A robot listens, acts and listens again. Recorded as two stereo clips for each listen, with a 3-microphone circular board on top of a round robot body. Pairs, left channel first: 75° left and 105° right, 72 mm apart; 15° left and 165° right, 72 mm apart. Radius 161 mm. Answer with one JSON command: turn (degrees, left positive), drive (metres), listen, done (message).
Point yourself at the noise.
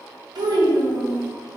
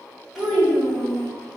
{"turn": -80}
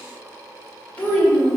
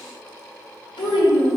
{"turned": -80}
{"done": "Facing the child speaking, 1 to 2 m away."}